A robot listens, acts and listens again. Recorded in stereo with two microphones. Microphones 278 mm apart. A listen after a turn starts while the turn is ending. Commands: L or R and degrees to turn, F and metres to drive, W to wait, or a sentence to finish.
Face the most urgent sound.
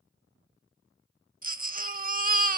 R30
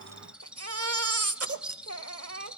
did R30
R120
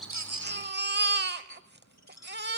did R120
R40
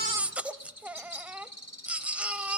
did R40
Facing the baby crying.